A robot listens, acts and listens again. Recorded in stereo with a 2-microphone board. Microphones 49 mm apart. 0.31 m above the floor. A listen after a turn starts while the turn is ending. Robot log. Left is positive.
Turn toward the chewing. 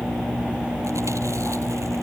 cmd idle
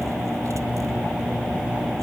cmd idle
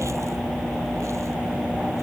end: I can't make out chewing to turn to.